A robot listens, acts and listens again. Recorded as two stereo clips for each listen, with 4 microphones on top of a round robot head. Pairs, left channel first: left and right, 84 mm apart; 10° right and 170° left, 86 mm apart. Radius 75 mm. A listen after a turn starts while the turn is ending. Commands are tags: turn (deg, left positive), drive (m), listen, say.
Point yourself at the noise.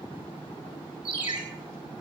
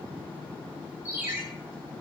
<turn deg="-115"/>
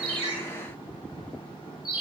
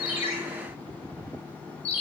<say>Facing the ringtone.</say>